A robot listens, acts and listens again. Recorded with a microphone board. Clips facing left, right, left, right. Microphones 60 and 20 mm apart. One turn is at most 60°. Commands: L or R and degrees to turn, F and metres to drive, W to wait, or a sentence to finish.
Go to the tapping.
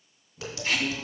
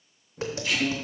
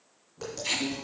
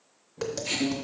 R35
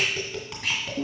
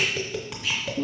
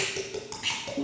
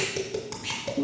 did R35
F1.0
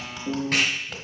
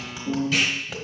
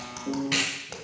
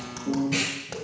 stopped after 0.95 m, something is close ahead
I am next to the tapping.